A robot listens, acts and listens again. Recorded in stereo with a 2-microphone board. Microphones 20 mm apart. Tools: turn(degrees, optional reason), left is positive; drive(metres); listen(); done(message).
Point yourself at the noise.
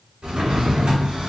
turn(degrees=-75, reason="The drawer: about 75° right or 105° right.")
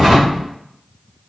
done("Found it: a drawer, straight ahead.")